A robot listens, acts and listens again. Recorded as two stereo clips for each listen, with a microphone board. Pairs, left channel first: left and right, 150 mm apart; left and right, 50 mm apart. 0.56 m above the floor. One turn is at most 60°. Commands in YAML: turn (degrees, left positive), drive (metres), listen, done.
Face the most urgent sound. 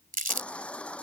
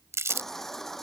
turn: 30
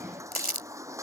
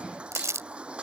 turn: -20
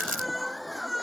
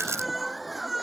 done: "Facing the baby crying."